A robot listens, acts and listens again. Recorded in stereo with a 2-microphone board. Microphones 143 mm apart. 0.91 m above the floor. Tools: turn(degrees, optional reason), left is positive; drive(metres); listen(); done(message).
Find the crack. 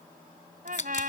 turn(degrees=55, reason="The crack: about 55° left or 125° left.")
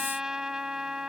listen()
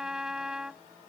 done("I heard a crack, but can't make it out now. It was about straight ahead or 70° left.")